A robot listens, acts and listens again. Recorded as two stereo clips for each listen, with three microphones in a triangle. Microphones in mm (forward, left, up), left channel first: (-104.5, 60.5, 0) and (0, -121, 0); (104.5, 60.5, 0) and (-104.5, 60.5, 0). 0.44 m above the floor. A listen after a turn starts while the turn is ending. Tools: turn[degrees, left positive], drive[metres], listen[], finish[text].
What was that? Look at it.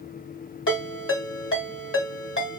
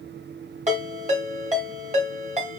Thought: The ringtone: 125° left.
Action: turn[125]
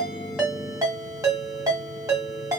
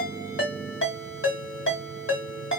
Thought: The ringtone is now 15° left.
Action: turn[15]
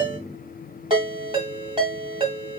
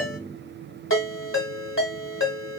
Action: finish[Found it: a ringtone, straight ahead.]